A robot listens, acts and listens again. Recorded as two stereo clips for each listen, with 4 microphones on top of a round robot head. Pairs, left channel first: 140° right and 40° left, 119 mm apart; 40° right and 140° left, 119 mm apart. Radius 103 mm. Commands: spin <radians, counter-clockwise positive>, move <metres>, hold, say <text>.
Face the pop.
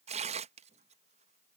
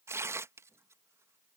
hold
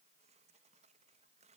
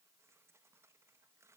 hold
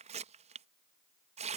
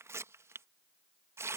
say I can't make out a pop, only tearing paper.